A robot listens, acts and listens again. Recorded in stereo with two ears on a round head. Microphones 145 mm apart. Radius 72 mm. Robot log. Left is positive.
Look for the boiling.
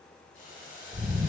note: The boiling: about 55° left or 125° left.
cmd yaw +55
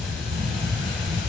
cmd idle
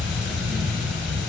cmd idle
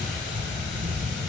end: I heard boiling, but can't make it out now. It was about straight ahead or 70° left.